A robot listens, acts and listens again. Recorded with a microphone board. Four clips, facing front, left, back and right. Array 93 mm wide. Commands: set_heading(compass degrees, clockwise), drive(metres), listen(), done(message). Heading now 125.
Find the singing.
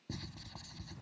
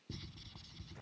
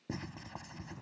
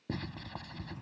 listen()
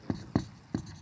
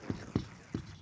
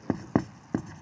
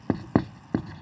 listen()
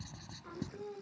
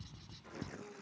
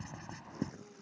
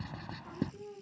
set_heading(145)
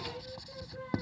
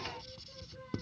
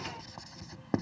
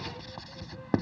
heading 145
listen()
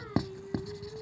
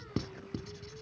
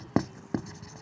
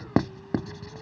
listen()
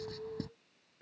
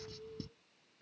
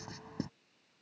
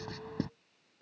done("Facing the singing.")